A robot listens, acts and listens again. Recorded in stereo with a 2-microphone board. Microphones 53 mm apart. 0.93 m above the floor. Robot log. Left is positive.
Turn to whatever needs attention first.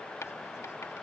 cmd idle
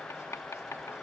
cmd idle
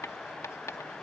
end: I can't make out anything urgent to turn to.